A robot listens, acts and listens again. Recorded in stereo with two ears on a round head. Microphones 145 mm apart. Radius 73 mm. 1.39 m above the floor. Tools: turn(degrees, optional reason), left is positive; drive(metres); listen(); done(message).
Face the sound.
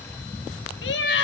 turn(degrees=90)
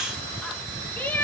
turn(degrees=10, reason="So it is at 10° left.")
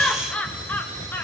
turn(degrees=15, reason="The laughter is now 15° left.")
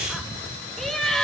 done("Found it: laughter, straight ahead, 2 to 4 m away.")